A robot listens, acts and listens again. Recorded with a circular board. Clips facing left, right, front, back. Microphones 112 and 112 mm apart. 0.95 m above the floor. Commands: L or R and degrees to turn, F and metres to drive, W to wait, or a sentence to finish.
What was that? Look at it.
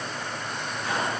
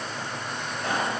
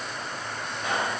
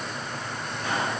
R70
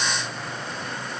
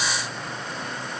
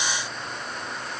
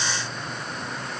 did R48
R25
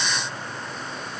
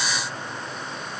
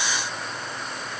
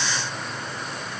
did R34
L10
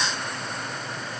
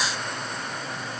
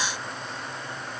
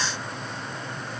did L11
Facing where the pop came from. I can't hear it now.